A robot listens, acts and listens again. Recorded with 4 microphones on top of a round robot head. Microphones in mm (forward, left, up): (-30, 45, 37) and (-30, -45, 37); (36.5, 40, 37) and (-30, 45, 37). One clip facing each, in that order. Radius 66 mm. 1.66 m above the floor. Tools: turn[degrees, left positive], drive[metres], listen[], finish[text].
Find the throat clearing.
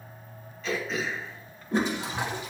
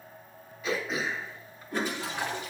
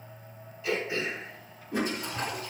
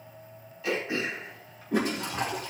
Thought: The throat clearing: 170° right.
Action: turn[-170]
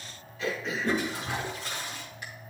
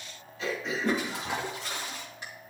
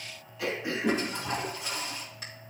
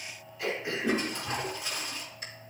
Thought: The throat clearing is now 20° right.
Action: turn[-20]
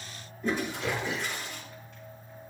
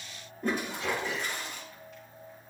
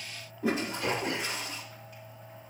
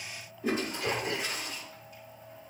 Action: finish[Facing the throat clearing, 2 to 4 m away.]